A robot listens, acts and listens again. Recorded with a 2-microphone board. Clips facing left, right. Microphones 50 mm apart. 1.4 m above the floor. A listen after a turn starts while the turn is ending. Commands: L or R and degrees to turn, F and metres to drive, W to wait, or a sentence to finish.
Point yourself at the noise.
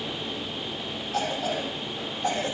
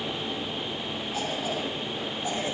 L75
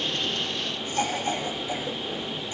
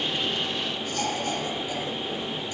L30
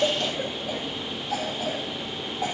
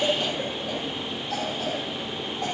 Facing the cough.